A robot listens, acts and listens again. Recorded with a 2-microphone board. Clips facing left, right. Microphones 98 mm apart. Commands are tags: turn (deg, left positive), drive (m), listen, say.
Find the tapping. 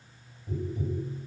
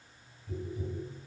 <turn deg="30"/>
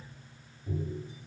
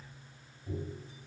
<say>Facing the tapping.</say>